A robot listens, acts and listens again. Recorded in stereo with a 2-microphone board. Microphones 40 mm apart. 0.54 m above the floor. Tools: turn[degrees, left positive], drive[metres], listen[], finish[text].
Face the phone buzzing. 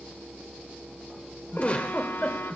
Thought: The phone buzzing: about 70° left or 110° left.
Action: turn[70]
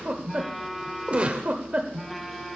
Action: finish[Facing the phone buzzing.]